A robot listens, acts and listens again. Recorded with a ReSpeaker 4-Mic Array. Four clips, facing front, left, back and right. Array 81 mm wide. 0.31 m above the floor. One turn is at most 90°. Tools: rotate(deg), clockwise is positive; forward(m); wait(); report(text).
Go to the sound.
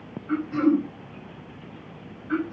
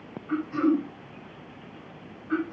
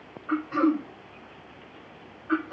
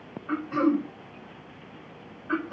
rotate(90)
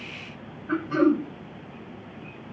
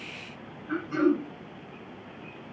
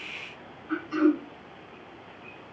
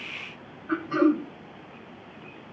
rotate(30)
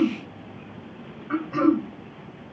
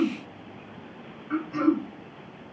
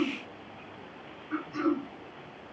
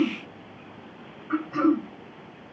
forward(1.0)
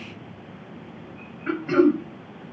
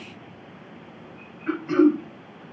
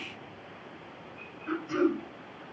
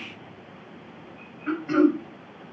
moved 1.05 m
forward(1.0)
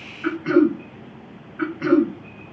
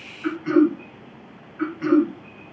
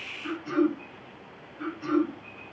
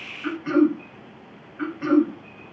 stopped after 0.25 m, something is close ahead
report("Arrived at the throat clearing, straight ahead.")